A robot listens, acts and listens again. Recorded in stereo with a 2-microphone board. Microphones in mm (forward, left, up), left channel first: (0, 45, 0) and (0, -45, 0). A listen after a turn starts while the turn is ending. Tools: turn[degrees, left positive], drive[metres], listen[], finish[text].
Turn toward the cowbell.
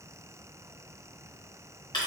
Action: listen[]
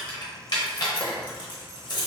Action: listen[]
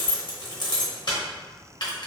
Action: finish[I can't make out a cowbell, only keys jangling.]